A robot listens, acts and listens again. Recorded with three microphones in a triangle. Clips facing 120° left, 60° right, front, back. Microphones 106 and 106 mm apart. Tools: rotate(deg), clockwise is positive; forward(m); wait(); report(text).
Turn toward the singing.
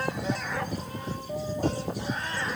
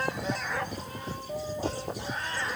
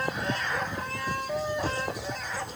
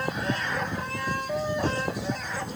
wait()
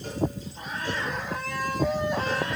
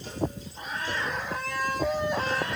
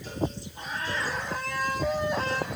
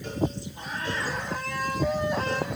wait()
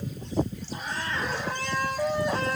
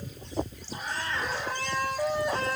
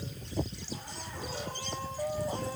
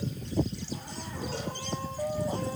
report("I can't make out singing to turn to.")